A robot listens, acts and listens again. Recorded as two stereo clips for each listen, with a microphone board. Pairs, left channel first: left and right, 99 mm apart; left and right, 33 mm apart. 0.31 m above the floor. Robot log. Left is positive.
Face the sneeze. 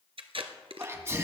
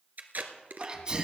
note: The sneeze: about 30° right or 150° right.
cmd yaw -30
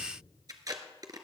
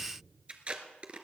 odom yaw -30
cmd idle
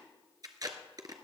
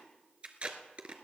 end: I heard a sneeze, but can't make it out now. It was about straight ahead or 120° right.